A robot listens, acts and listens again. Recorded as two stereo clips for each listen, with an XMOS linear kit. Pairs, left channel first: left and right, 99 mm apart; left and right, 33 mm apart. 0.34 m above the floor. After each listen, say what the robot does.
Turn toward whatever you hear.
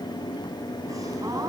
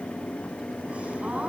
Turn 35° right.
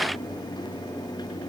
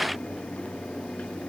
Keep listening.
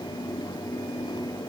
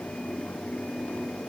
I heard a gasp, but can't make it out now. It was about straight ahead or 110° right.